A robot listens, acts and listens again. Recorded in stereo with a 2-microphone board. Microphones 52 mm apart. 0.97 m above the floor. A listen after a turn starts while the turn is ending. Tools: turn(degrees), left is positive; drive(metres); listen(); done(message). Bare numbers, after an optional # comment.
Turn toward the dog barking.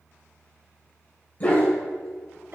# The dog barking: about 35° left or 145° left.
turn(35)
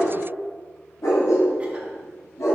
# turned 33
# So it is at 105° left.
turn(105)
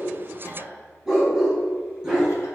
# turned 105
# The dog barking is now 10° right.
turn(-10)
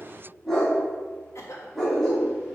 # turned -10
done("Facing the dog barking.")